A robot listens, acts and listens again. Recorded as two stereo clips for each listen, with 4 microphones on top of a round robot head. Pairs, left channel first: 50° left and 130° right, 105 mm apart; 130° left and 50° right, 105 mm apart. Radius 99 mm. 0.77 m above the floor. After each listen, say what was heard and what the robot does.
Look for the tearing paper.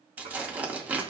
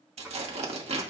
The tearing paper: 55° right. Turn 55° right.
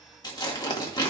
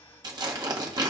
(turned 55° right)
Facing the tearing paper, 1 to 2 m away.